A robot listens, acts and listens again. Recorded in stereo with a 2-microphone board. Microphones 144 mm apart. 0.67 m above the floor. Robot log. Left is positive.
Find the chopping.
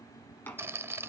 cmd yaw +30
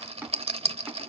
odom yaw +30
note: So it is at 15° right.
cmd yaw -15
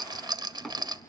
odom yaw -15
end: Found it: chopping, straight ahead.